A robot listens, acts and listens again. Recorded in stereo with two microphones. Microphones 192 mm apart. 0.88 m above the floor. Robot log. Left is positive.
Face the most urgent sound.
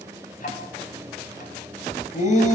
note: The shout: about 40° left or 140° left.
cmd yaw +40
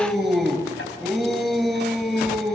end: Facing the shout.